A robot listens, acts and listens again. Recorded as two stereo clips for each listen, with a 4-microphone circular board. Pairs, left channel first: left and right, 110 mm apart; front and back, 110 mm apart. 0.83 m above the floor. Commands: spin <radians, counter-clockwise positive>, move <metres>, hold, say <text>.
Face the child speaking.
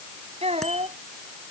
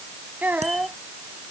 spin -1.83
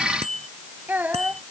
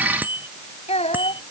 spin -0.26
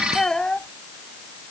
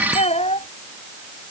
spin 0.17
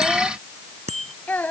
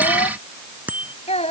spin 0.26
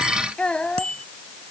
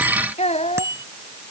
spin 0.17
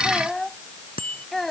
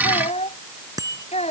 say Found it: a child speaking, straight ahead.